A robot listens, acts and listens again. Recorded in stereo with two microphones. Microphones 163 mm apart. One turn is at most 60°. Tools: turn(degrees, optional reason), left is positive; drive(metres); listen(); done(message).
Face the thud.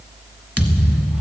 turn(degrees=-30)
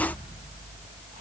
listen()
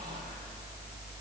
done("I heard a thud, but can't make it out now. It was about 20° left or 140° right.")